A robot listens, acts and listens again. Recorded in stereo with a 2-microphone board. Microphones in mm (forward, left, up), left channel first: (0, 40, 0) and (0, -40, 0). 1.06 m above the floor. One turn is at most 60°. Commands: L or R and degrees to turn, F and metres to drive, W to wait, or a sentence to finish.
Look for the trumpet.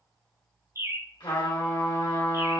L60
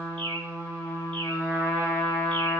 L35
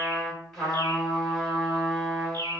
Facing the trumpet.